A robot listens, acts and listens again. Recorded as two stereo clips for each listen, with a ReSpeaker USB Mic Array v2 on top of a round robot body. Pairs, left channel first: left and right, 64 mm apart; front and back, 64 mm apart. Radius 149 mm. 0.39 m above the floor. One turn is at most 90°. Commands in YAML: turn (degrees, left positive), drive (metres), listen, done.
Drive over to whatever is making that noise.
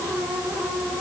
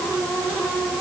listen: true
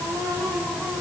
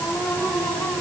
listen: true
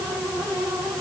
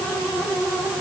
done: "I can't make out anything."